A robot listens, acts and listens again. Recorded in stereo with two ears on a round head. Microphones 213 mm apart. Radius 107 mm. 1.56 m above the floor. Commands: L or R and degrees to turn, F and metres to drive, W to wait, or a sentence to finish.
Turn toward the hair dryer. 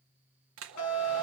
R55
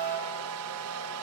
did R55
R70
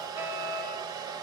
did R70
R15
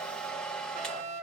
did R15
Found it: a hair dryer, straight ahead, 1 to 2 m away.